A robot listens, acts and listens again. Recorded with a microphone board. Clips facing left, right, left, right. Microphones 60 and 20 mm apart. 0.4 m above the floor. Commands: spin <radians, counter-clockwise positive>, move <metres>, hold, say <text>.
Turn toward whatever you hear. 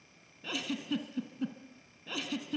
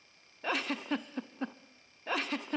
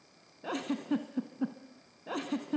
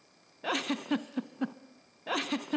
spin -0.96
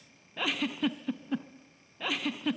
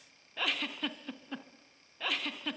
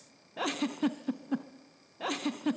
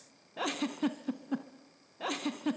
say Found it: a giggle, straight ahead.